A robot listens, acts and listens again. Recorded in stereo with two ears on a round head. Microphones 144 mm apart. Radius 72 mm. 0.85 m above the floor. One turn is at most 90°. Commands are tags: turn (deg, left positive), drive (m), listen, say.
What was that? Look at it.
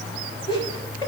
<turn deg="30"/>
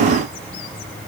<listen/>
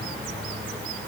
<listen/>
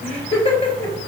<turn deg="40"/>
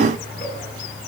<listen/>
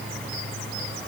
<listen/>
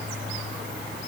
<say>I heard laughter, but can't make it out now. It was about straight ahead or 100° left.</say>